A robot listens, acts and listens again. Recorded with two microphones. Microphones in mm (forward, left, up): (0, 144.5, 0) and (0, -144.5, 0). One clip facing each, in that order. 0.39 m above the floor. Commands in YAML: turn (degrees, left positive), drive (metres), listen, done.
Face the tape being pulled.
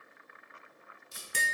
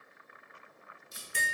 turn: 60
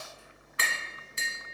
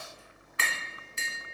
listen: true
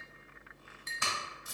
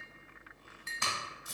turn: 10
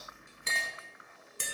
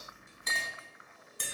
listen: true
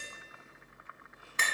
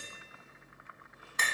listen: true
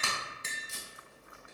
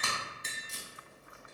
done: "Facing the tape being pulled."